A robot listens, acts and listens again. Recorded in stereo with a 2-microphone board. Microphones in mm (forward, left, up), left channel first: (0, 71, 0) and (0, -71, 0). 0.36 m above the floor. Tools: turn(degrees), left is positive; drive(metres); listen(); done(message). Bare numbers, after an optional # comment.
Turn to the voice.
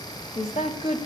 # The woman speaking: about 55° left or 125° left.
turn(55)
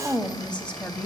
# So it is at 10° left.
turn(10)
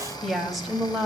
done("Found it: a woman speaking, straight ahead, 2 to 4 m away.")